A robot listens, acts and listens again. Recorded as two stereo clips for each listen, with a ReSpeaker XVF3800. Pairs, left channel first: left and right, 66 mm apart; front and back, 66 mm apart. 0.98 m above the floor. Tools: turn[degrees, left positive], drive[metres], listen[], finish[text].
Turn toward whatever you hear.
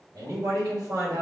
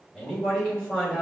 Thought: The man speaking: 70° right.
Action: turn[-70]
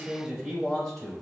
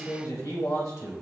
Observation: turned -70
Action: finish[Found it: a man speaking, straight ahead, 2 to 4 m away.]